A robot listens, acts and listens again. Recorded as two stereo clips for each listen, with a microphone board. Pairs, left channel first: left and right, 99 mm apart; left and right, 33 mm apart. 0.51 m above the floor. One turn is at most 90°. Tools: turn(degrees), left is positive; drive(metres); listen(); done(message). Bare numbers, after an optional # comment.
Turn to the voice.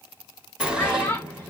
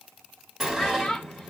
# The child speaking: about 20° left or 160° left.
turn(20)
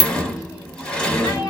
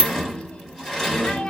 listen()
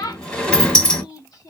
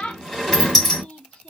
# So it is at 135° left.
turn(90)
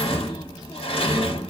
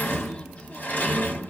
# Nothing new. It was at 45° left.
turn(45)
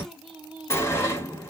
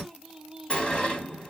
listen()
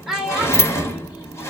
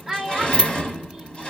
done("Facing the child speaking, under 1 m away.")